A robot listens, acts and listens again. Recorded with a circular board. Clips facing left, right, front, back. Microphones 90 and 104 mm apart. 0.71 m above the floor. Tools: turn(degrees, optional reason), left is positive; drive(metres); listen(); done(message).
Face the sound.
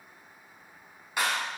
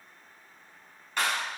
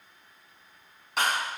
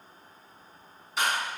turn(degrees=10, reason="The clap: 10° left.")
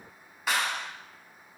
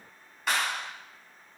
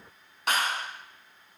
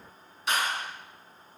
done("Facing the clap.")